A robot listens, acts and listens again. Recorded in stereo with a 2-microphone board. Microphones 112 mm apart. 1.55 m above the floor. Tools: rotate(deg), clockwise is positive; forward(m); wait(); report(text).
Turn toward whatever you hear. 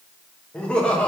rotate(-30)
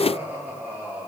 rotate(15)
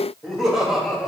report("Found it: laughter, straight ahead, 2 to 4 m away.")